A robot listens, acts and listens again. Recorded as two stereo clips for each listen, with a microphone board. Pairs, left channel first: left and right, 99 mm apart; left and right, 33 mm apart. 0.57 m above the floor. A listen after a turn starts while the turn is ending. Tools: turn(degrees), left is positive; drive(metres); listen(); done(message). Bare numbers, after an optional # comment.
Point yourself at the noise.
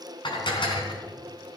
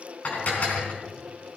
# The dishes clattering: about 50° left or 130° left.
turn(50)
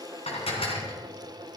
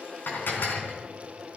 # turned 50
# So it is at 75° left.
turn(75)
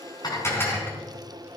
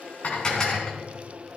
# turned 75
# The dishes clattering is now 25° left.
turn(25)
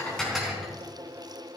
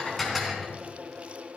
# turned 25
done("Found it: dishes clattering, straight ahead.")